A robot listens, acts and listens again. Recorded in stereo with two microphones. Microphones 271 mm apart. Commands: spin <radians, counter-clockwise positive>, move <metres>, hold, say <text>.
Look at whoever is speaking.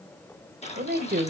spin -0.61
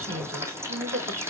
spin -1.75
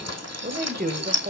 spin -0.79
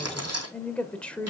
say Facing the woman speaking.